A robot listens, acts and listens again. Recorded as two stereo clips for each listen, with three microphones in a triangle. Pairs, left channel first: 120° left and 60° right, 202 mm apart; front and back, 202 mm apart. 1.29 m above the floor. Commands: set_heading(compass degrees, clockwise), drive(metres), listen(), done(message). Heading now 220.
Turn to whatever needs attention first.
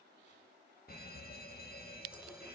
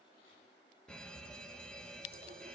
set_heading(135)
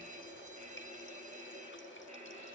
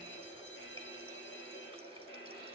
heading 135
set_heading(145)
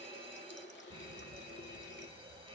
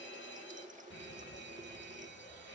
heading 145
done("Facing the fire alarm, 2 to 4 m away.")